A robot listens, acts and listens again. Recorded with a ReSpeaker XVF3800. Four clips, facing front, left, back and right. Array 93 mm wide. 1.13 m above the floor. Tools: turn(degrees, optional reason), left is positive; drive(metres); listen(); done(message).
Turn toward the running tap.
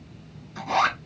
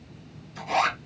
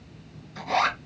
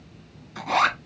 listen()
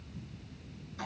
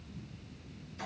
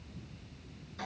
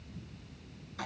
listen()
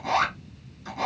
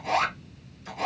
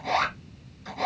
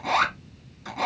done("I can't make out a running tap to turn to.")